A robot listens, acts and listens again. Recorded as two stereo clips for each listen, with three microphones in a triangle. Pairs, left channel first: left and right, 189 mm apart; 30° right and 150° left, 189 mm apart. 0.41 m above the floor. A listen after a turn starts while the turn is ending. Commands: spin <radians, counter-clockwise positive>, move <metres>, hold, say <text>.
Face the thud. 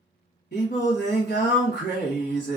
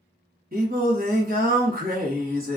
hold
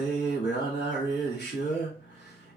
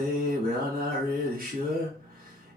hold
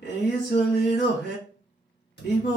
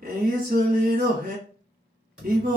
spin 1.13
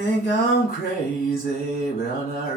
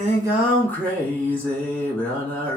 say I heard a thud from this way, but can't make it out now.